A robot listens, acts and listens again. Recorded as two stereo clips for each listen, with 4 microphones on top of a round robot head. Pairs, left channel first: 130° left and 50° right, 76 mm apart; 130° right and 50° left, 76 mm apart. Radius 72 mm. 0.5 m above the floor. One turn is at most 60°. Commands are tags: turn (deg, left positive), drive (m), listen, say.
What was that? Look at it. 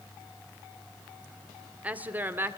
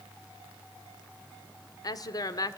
<turn deg="-60"/>
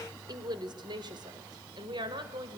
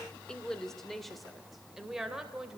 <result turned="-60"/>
<turn deg="-30"/>
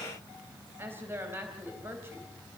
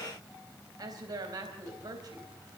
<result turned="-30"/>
<turn deg="15"/>
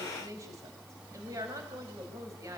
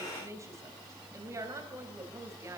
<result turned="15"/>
<say>Facing the woman speaking, 2 to 4 m away.</say>